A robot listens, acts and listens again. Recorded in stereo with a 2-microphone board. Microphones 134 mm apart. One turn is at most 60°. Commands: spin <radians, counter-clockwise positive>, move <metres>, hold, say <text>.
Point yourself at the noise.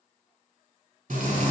spin -1.05
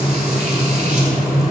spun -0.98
spin -0.96
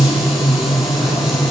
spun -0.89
say Found it: frying, straight ahead.